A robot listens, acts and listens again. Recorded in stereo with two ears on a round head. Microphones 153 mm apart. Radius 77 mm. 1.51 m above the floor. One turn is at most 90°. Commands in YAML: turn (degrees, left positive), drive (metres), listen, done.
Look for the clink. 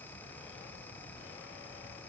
listen: true
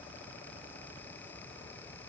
listen: true
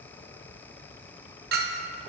turn: -60
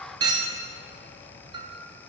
turn: -30
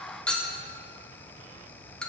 done: "Found it: a clink, straight ahead."